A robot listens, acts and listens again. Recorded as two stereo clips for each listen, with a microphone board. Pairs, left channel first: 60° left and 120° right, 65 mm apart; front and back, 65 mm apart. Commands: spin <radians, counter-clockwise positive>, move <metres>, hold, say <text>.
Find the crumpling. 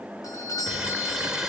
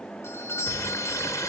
spin -0.70
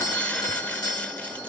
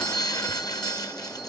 hold
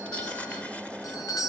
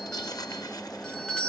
hold
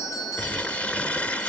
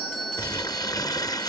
spin -0.17
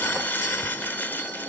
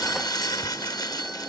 say Facing the crumpling, 1 to 2 m away.